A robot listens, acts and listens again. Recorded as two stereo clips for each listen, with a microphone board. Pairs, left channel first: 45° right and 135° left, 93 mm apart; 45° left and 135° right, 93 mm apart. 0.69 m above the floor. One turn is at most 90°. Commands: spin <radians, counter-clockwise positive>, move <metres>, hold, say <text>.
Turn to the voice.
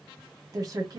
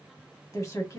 spin 1.57
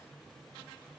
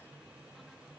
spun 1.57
hold
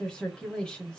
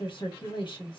spin 0.61
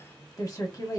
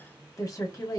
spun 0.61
say Facing the woman speaking, 1 to 2 m away.